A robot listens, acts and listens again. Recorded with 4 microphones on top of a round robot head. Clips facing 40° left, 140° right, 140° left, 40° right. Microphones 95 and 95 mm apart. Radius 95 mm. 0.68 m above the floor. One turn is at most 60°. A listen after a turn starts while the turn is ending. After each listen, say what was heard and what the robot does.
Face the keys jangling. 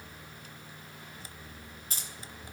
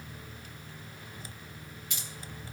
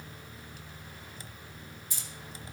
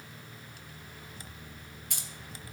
The keys jangling: 10° right. Turn 10° right.
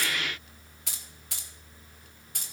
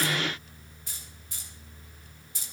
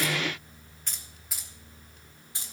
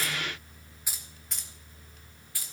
The keys jangling is now 75° left. Turn 60° left.
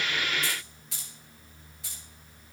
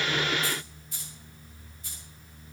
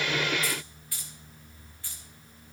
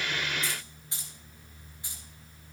The keys jangling is now 30° left. Turn 30° left.
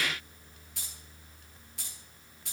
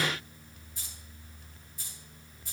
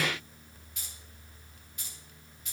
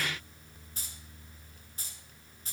The keys jangling is now 15° left. Turn 15° left.
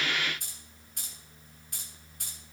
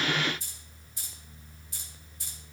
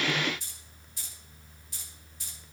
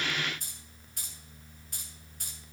Facing the keys jangling.